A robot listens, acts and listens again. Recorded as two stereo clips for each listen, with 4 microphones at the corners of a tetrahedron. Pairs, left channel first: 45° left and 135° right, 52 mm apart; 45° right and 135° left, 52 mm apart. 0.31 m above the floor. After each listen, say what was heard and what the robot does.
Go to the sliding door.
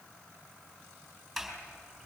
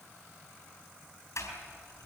The sliding door: 45° right. Turn 45° right.
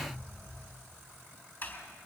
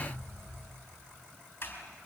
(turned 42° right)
Drive 1.0 m forward.
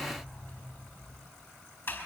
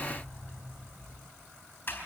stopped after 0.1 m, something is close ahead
Something is in my way. I am facing the sliding door but have not reached it.